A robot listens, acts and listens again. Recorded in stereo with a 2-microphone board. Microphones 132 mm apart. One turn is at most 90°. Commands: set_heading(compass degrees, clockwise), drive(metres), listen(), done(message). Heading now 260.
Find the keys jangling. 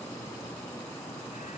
listen()
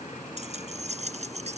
set_heading(320)
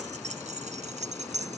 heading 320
set_heading(25)
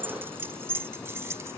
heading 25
set_heading(45)
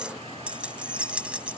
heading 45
set_heading(55)
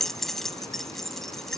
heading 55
done("Found it: keys jangling, straight ahead.")